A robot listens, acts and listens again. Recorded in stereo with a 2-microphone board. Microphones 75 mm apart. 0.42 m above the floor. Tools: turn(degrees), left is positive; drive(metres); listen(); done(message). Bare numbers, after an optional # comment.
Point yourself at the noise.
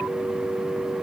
listen()
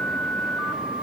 listen()
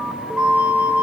turn(-30)
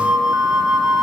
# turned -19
done("Found it: a flute, straight ahead, under 1 m away.")